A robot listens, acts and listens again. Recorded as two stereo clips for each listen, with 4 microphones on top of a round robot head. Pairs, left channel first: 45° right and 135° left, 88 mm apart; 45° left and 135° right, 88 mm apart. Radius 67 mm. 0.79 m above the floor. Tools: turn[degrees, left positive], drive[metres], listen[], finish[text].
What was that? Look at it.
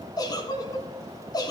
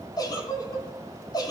Action: finish[Facing the giggle, 2 to 4 m away.]